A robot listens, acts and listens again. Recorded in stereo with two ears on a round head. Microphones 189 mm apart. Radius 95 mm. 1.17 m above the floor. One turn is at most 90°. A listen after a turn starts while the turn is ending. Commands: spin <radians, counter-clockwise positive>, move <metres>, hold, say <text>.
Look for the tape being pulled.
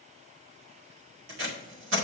spin -1.05
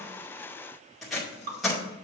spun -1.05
say Found it: tape being pulled, straight ahead.